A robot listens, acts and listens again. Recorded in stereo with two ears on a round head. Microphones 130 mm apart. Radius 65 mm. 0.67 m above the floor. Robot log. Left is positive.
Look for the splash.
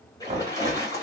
note: The splash: about 25° left or 155° left.
cmd yaw +25
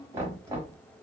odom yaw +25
cmd idle
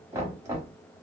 end: I heard a splash, but can't make it out now. It was about straight ahead or 130° left.